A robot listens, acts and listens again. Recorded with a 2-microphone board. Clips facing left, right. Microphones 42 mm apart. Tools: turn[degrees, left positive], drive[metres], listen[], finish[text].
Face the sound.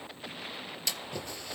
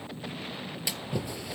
Thought: The splash: about 15° right or 165° right.
Action: turn[-15]
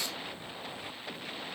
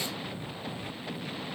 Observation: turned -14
Action: listen[]
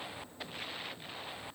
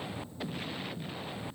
Action: finish[I heard a splash, but can't make it out now. It was about straight ahead or 150° right.]